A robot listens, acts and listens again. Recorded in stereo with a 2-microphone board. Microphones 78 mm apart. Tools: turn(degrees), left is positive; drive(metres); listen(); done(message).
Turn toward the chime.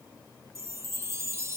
turn(degrees=-35)
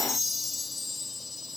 done("Found it: a chime, straight ahead.")